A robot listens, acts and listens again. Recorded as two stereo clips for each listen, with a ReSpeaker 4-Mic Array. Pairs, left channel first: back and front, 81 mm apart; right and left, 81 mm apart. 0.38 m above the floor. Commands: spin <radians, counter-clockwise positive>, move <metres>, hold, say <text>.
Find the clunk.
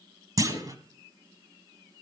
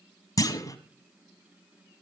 spin -0.79
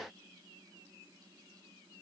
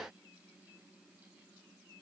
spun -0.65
spin -0.17
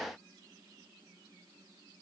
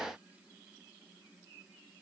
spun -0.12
say I heard a clunk from this way, but can't make it out now.